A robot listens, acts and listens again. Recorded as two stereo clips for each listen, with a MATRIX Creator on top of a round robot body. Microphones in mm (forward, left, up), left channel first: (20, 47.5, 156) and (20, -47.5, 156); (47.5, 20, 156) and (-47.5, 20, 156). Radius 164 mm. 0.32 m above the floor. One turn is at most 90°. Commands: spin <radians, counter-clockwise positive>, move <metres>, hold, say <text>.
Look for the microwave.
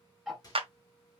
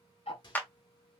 spin 0.70
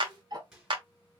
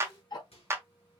say Found it: a microwave, straight ahead, 2 to 4 m away.